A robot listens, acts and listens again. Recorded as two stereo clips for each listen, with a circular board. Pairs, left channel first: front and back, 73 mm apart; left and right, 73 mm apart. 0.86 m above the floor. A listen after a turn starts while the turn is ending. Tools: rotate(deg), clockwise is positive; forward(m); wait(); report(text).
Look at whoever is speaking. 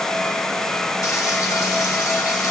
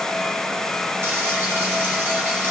wait()
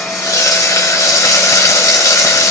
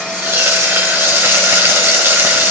wait()
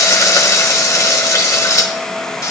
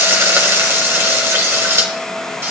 report("I can't make out anyone speaking to turn to.")